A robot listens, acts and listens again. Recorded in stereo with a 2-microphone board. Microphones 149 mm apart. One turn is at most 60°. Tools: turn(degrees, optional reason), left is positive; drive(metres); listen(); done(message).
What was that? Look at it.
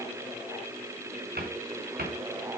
turn(degrees=-60, reason="The cupboard door: about 75° right or 105° right.")
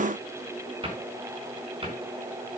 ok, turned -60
turn(degrees=-35, reason="So it is at 35° right.")
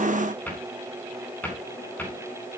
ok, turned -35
turn(degrees=10, reason="The cupboard door is now 10° left.")
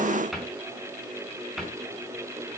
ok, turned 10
done("Facing the cupboard door.")